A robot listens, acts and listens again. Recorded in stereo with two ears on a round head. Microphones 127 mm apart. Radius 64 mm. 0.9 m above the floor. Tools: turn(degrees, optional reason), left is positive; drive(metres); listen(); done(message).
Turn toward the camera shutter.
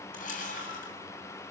turn(degrees=65, reason="The camera shutter: about 65° left or 115° left.")
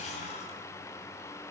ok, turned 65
listen()
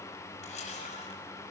turn(degrees=50, reason="So it is at 50° left.")
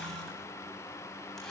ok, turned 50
listen()
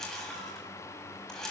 done("Facing the camera shutter, over 4 m away.")